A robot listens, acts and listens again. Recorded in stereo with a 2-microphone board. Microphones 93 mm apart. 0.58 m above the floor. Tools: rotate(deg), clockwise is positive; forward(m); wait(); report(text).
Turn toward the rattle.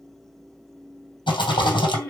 rotate(-65)
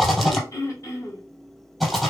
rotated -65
report("Found it: a rattle, straight ahead.")